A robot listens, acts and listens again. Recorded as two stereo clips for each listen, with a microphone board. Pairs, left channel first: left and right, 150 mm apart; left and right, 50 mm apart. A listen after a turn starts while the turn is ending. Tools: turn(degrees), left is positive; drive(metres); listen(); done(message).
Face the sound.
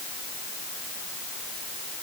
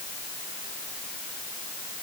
listen()
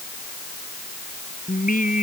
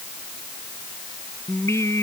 turn(degrees=70)
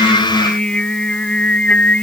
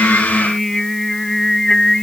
turn(degrees=10)
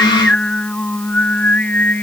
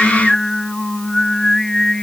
turn(degrees=10)
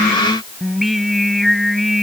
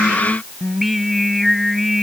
done("Found it: singing, straight ahead.")